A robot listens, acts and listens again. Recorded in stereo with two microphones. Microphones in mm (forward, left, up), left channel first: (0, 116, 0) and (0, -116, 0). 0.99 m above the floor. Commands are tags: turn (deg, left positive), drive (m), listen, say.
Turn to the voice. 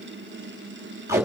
<listen/>
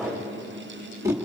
<listen/>
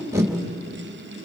<say>I can't make out anyone speaking, only tape being pulled.</say>